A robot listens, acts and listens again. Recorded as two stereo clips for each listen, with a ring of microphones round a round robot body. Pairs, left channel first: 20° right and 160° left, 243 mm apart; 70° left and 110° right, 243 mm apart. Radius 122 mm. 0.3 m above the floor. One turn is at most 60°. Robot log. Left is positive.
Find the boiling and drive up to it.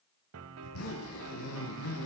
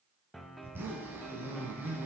cmd idle
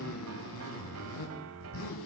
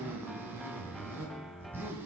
cmd idle
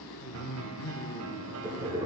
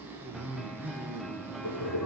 note: The boiling: 85° left.
cmd yaw +60
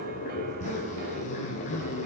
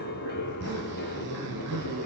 note: The boiling is now 35° left.
cmd yaw +35
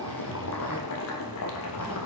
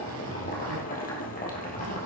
note: The boiling is now 10° left.
cmd yaw +10
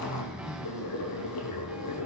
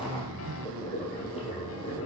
cmd fwd 1.0
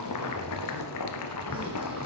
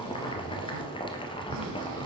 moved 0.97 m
cmd fwd 1.0
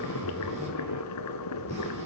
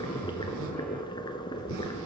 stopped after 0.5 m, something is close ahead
end: Arrived at the boiling, straight ahead.